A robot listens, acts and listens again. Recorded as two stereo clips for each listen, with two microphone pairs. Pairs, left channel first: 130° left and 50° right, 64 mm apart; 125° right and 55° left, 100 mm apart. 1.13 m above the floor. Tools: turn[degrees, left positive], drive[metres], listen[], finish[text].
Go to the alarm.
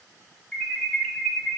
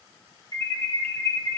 Thought: The alarm: 55° left.
Action: turn[55]
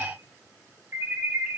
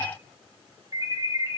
Action: drive[1.0]
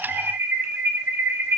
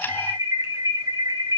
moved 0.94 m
Action: drive[1.0]
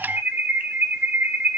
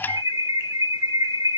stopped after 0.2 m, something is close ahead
Action: finish[Arrived at the alarm, straight ahead.]